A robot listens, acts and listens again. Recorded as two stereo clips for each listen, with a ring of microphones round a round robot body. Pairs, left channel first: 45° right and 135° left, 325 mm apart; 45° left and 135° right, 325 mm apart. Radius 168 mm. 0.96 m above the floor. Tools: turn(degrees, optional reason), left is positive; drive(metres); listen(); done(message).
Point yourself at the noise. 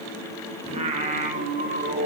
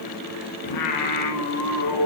turn(degrees=75, reason="The singing: 75° left.")
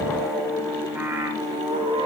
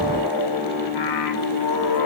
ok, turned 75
turn(degrees=60, reason="The singing is now 60° left.")
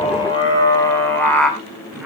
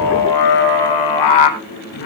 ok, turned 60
turn(degrees=45, reason="The singing is now 45° left.")
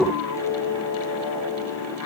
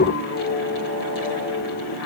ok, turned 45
done("Facing the singing, 2 to 4 m away.")